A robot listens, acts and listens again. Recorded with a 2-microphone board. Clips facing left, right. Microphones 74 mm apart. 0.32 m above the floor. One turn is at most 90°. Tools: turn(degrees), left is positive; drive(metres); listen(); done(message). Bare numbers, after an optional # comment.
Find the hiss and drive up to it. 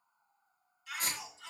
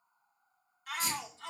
# The hiss: about 55° left or 125° left.
turn(55)
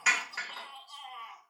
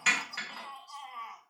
# So it is at 10° left.
turn(10)
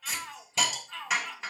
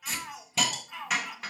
drive(1.0)
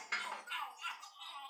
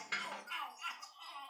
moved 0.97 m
drive(1.0)
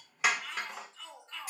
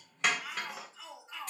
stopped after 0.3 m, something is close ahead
# The hiss is now 10° left.
turn(10)
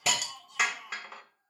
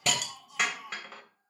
done("Arrived at the hiss, straight ahead.")